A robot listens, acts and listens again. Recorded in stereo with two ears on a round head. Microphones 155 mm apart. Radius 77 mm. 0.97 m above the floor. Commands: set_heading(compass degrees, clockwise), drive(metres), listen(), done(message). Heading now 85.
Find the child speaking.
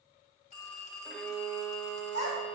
set_heading(15)
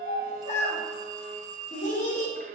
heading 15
set_heading(330)
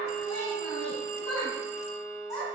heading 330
set_heading(310)
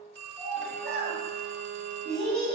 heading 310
done("Facing the child speaking, over 4 m away.")